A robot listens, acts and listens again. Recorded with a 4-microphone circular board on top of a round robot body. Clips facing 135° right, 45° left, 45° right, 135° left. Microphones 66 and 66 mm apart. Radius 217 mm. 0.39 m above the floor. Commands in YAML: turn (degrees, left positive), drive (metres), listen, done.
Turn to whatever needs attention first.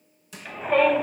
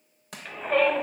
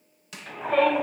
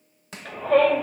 turn: 130
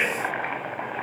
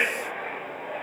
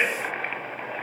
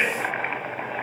turn: 25
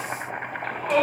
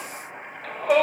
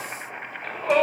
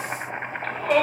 turn: 15
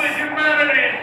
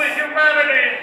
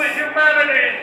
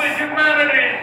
done: "Facing the shout."